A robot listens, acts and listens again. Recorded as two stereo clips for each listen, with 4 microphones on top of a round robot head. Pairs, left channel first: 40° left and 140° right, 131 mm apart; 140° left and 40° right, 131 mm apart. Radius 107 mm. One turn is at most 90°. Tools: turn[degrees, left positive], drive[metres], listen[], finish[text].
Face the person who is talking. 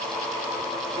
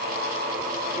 Action: listen[]
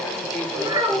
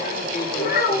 Thought: The child speaking: 150° left.
Action: turn[90]
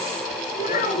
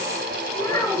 Thought: The child speaking is now 65° left.
Action: turn[65]
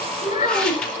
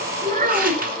Thought: The child speaking is now 10° right.
Action: turn[-10]
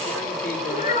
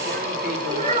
Action: finish[Facing the child speaking.]